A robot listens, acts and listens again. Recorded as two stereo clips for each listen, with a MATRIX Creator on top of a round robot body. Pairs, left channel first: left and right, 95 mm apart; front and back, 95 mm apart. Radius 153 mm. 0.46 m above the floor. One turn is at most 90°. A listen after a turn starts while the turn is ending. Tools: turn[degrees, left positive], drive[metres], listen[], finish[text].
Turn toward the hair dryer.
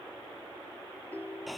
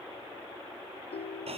Action: listen[]
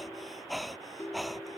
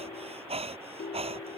Action: listen[]
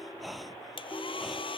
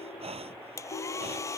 Thought: The hair dryer: 60° left.
Action: turn[60]
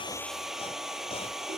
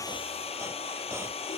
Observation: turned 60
Action: finish[Found it: a hair dryer, straight ahead.]